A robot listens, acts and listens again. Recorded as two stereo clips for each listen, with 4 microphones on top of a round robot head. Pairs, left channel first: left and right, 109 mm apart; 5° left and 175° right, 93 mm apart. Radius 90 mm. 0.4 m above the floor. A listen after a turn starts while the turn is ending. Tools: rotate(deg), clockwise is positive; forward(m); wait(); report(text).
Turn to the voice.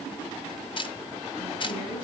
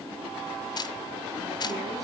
wait()
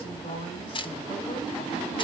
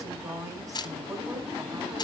rotate(-135)
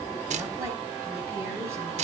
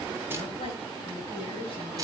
wait()
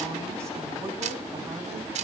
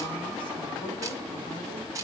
wait()
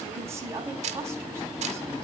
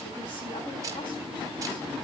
rotate(25)
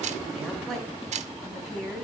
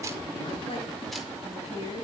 report("Facing the woman speaking, 2 to 4 m away.")